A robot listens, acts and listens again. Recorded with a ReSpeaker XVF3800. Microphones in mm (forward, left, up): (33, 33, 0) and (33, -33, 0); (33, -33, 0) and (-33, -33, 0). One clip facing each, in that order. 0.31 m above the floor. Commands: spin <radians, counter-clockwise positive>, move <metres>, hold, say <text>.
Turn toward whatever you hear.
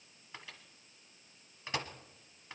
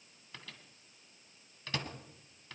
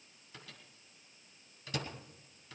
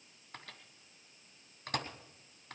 spin 2.79
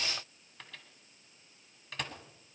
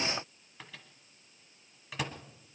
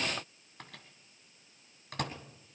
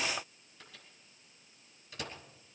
say Found it: a microwave, straight ahead.